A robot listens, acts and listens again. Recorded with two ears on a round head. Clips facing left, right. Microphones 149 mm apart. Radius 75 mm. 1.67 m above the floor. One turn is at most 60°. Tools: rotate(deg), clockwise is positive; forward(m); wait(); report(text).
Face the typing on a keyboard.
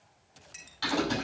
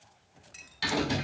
rotate(20)
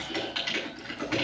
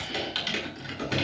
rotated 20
rotate(60)
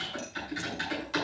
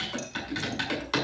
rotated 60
rotate(60)
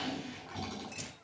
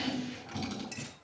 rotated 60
rotate(25)
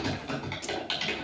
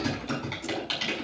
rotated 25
report("Found it: typing on a keyboard, straight ahead.")